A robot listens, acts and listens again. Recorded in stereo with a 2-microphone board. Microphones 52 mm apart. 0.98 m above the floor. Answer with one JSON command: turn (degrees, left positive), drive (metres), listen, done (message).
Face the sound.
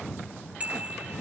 {"turn": -30}
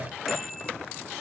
{"listen": true}
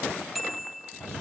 {"done": "Found it: a bicycle bell, straight ahead."}